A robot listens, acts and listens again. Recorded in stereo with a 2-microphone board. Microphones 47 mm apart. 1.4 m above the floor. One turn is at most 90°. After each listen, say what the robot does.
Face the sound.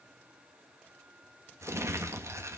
Turn 90° right.
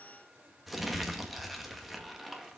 Found it: crumpling, straight ahead, 1 to 2 m away.